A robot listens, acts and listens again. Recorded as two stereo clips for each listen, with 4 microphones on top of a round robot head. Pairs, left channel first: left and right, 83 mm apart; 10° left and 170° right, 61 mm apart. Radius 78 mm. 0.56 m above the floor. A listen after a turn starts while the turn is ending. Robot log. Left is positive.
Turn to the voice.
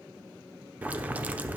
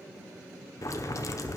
cmd idle
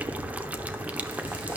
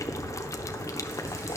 cmd idle
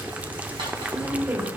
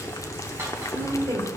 note: The woman speaking: 155° right.
cmd yaw -155
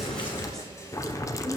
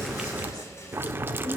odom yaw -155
cmd idle
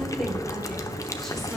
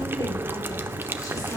cmd idle
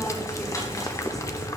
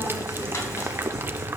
end: Facing where the woman speaking came from. I can't hear it now.